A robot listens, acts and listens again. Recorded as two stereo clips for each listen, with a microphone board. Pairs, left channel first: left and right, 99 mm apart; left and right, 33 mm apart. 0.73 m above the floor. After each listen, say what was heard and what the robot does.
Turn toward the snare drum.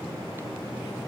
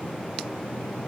Keep listening.
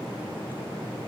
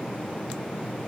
Keep listening.
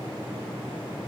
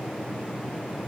I can't make out a snare drum to turn to.